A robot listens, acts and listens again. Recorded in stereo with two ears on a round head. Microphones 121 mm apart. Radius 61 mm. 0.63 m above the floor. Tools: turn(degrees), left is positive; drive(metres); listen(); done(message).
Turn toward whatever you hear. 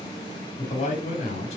turn(degrees=50)
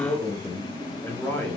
turn(degrees=10)
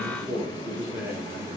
turn(degrees=-15)
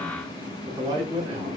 turn(degrees=-30)
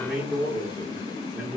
turn(degrees=-10)
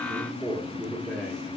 done("Found it: a man speaking, straight ahead, 1 to 2 m away.")